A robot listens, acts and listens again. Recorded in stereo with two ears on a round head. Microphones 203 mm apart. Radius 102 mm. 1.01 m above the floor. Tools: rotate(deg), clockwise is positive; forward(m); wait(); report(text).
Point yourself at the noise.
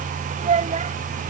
rotate(30)
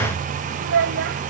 rotate(120)
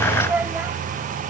rotate(10)
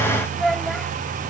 report("Found it: a child speaking, straight ahead.")